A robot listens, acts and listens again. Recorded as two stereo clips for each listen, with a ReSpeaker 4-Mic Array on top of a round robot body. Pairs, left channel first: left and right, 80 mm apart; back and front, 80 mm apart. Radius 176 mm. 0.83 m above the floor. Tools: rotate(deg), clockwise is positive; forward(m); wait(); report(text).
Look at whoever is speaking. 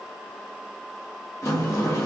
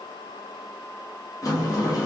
wait()
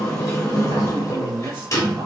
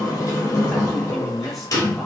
rotate(90)
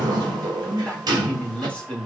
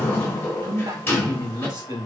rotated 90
rotate(-15)
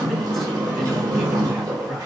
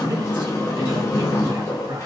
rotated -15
wait()
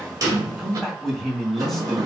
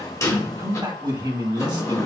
report("Facing the man speaking, 2 to 4 m away.")